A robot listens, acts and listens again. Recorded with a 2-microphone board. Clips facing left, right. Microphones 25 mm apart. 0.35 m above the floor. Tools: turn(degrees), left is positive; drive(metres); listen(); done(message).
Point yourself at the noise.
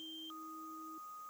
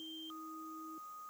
listen()
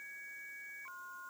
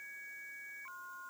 listen()
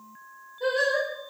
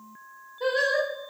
turn(degrees=-25)
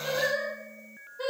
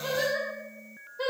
turn(degrees=-25)
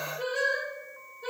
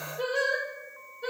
turn(degrees=-35)
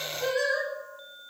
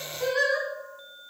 turn(degrees=-40)
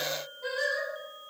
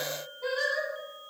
turn(degrees=-25)
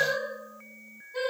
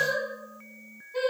turn(degrees=-10)
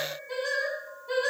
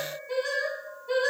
done("Found it: singing, straight ahead, 1 to 2 m away.")